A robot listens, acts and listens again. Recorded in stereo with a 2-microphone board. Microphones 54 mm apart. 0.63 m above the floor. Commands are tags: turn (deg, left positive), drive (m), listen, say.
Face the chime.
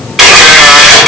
<listen/>
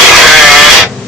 <listen/>
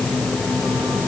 <say>I can't make out a chime to turn to.</say>